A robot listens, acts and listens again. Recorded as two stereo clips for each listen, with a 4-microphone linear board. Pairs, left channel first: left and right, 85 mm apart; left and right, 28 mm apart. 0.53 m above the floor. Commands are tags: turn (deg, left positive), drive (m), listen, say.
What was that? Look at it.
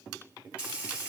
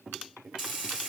<turn deg="-15"/>
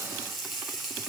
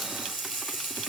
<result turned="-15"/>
<say>Found it: frying, straight ahead, 1 to 2 m away.</say>